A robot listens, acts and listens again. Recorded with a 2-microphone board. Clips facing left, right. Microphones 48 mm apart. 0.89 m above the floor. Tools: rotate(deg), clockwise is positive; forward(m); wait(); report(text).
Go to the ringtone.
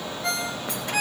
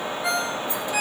rotate(30)
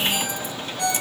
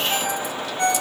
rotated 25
rotate(145)
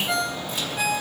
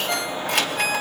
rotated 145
forward(1.0)
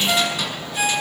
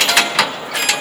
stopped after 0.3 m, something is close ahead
wait()
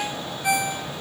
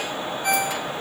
rotate(-15)
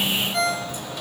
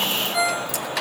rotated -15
report("Blocked. The ringtone is further on, straight ahead.")